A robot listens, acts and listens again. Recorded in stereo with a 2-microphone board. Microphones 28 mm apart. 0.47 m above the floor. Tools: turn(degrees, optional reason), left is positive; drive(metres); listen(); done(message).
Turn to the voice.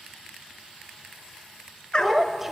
turn(degrees=-30)
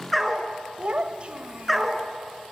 turn(degrees=-135, reason="So it is at 135° right.")
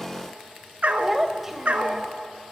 turn(degrees=-10, reason="The child speaking is now 10° right.")
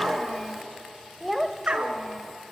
done("Facing the child speaking.")